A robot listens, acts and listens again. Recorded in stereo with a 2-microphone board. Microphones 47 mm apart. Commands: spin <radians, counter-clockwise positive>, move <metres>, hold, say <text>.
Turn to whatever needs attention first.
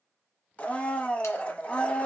hold
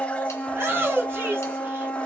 spin -1.13
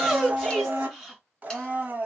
say Facing the shout, 2 to 4 m away.